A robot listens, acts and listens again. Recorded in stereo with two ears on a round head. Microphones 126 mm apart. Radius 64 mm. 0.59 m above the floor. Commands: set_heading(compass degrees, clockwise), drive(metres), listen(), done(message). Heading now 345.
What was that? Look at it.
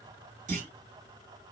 set_heading(50)
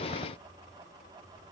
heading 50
listen()
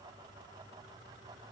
done("I heard a clunk, but can't make it out now. It was about straight ahead or 50° right.")